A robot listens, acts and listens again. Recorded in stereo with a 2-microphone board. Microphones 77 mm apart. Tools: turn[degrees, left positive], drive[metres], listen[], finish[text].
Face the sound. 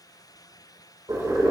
Thought: The boiling: about 60° right or 120° right.
Action: turn[-60]
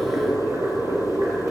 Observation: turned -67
Thought: So it is at 50° right.
Action: turn[-50]
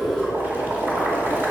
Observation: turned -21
Thought: The boiling is now 30° right.
Action: turn[-30]
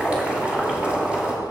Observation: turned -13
Thought: The boiling is now 15° right.
Action: turn[-15]
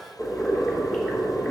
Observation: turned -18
Action: finish[Facing the boiling.]